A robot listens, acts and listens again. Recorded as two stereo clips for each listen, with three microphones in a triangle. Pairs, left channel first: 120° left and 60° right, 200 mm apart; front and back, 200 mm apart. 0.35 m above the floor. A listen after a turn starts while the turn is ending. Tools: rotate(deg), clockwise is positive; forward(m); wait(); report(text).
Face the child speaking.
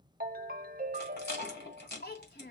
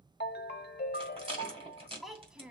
rotate(-95)
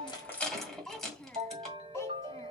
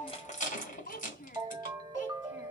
rotate(-35)
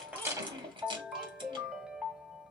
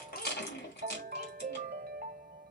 wait()
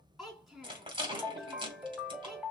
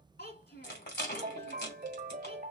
rotate(-30)
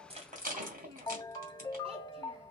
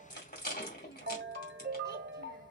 wait()
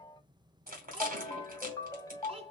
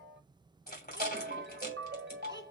report("Facing the child speaking, 2 to 4 m away.")